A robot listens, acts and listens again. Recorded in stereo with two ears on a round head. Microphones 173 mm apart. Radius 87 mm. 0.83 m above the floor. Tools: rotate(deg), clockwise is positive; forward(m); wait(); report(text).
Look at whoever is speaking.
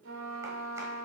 wait()
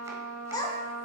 rotate(-20)
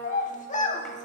rotate(-140)
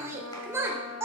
rotate(15)
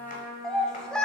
report("Facing the child speaking, 1 to 2 m away.")